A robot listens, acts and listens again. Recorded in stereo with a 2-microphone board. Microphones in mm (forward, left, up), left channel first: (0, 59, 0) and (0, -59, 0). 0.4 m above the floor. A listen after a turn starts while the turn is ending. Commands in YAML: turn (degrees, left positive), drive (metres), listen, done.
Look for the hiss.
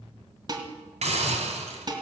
turn: -75
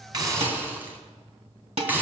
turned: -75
turn: -15
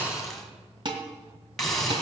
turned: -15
done: "Facing the hiss."